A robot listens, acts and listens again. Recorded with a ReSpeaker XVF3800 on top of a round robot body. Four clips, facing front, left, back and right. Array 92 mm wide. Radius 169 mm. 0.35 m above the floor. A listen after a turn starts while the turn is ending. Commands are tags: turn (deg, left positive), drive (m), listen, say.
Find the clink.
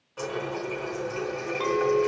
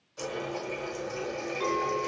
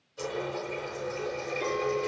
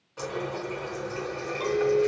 <say>Found it: a clink, straight ahead, over 4 m away.</say>